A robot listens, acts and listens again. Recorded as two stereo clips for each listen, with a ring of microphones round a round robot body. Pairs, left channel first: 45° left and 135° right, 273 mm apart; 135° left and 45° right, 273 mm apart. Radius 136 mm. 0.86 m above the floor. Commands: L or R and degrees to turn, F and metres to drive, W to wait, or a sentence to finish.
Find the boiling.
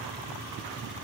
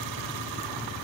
W
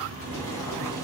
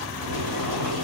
R35
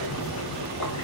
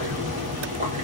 L15
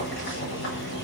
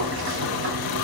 Facing the boiling.